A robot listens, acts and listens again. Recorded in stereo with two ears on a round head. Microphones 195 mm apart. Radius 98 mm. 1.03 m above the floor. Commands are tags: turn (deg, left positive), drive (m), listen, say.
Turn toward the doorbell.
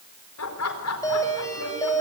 <turn deg="15"/>
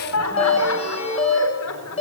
<turn deg="150"/>
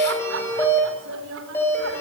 <turn deg="10"/>
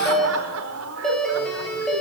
<say>Found it: a doorbell, straight ahead, over 4 m away.</say>